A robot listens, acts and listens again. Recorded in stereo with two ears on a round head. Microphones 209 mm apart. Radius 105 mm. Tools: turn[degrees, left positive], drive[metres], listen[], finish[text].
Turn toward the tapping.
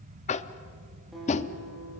Thought: The tapping: about 30° left or 150° left.
Action: turn[30]
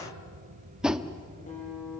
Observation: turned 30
Action: finish[Found it: tapping, straight ahead, under 1 m away.]